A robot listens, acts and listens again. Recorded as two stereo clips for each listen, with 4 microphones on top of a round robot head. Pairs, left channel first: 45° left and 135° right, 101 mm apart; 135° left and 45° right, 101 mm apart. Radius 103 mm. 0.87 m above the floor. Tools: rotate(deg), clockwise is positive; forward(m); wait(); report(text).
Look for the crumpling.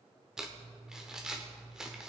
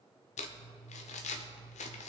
rotate(-140)
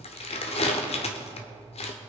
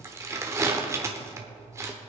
rotate(-20)
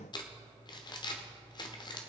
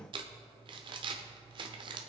report("Found it: crumpling, straight ahead, under 1 m away.")